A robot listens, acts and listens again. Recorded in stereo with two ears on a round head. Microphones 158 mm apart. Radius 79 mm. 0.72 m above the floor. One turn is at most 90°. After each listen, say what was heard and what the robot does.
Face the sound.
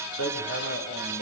Turn 90° left.
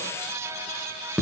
Found it: hammering, straight ahead, over 4 m away.